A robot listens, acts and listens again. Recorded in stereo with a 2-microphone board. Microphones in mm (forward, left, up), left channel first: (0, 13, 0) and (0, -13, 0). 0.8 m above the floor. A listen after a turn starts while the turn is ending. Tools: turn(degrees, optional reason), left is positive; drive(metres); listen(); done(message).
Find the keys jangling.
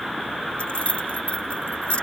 turn(degrees=55, reason="The keys jangling: about 55° left or 125° left.")
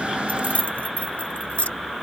turn(degrees=70, reason="So it is at 70° left.")
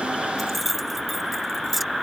done("Facing the keys jangling.")